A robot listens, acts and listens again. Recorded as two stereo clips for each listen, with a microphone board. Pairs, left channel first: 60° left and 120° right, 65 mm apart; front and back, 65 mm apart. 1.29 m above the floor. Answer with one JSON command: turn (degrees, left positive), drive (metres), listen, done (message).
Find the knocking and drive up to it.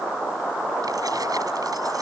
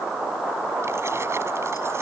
{"listen": true}
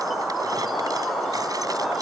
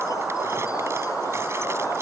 {"listen": true}
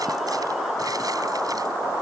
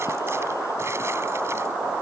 {"done": "I can't make out knocking to turn to."}